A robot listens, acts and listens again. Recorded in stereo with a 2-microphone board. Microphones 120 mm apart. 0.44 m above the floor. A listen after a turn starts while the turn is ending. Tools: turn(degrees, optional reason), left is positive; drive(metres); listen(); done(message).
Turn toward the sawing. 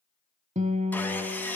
turn(degrees=30)
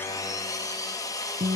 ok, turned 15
turn(degrees=150, reason="So it is at 150° left.")
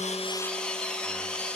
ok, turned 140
turn(degrees=10, reason="The sawing is now 10° left.")
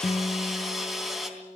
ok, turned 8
done("Found it: sawing, straight ahead, 2 to 4 m away.")